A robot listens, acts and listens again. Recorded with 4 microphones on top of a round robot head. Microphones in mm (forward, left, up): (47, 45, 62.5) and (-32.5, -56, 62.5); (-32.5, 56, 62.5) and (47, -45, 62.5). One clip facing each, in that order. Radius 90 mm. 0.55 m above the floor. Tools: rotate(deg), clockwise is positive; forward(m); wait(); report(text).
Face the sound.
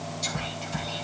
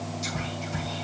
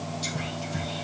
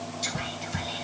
rotate(15)
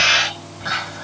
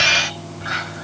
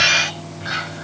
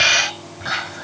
report("Found it: whispering, straight ahead.")